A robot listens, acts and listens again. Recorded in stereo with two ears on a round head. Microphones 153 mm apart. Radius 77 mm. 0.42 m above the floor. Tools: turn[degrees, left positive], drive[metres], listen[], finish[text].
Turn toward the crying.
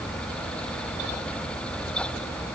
Action: listen[]
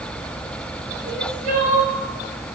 Thought: The crying: about 50° right or 130° right.
Action: turn[-50]
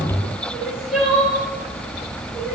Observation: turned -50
Action: finish[Facing the crying, 1 to 2 m away.]